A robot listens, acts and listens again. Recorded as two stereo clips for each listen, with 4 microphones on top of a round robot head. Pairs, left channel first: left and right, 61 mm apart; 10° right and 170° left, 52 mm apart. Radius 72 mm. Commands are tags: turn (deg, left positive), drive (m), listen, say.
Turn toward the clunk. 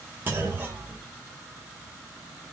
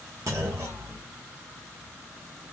<turn deg="-150"/>
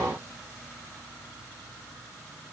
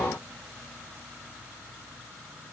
<say>Facing where the clunk came from. I can't hear it now.</say>